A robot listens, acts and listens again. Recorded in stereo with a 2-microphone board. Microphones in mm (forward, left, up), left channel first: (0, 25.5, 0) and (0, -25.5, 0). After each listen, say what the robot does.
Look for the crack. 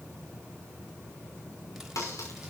Turn 90° left.
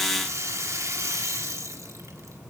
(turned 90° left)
I heard a crack from this way, but can't make it out now.